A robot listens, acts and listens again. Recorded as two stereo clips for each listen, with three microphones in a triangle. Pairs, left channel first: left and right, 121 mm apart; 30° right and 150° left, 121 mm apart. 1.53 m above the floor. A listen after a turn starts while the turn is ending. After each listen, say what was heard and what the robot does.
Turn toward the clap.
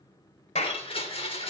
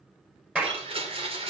The clap: 70° left. Turn 70° left.
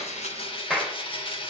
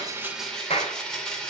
Found it: a clap, straight ahead.